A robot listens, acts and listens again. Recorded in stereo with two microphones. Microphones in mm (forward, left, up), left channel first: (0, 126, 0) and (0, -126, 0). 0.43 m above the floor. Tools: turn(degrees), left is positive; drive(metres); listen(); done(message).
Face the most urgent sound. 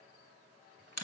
listen()
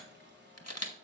listen()
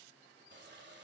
done("I can't make out anything urgent, only a camera shutter and a running tap.")